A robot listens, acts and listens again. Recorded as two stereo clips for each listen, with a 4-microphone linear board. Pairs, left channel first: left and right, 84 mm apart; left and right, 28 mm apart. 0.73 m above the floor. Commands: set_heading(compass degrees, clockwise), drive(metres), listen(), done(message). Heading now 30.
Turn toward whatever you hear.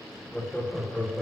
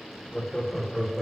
set_heading(0)
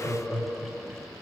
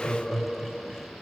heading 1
set_heading(341)
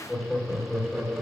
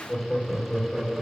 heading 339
set_heading(309)
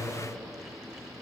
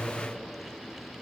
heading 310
set_heading(280)
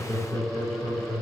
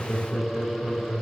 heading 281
set_heading(256)
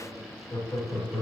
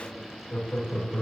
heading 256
set_heading(121)
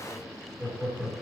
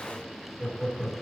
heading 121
done("Found it: laughter, straight ahead, 2 to 4 m away.")